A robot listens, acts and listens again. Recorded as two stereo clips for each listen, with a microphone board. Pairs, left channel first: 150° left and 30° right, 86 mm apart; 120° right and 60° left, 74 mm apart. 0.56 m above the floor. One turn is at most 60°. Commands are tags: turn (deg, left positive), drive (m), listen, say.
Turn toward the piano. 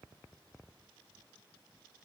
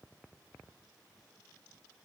<listen/>
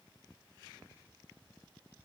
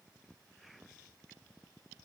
<listen/>
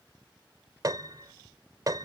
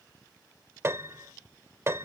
<turn deg="10"/>
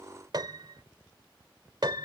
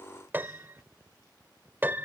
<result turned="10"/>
<say>Facing the piano.</say>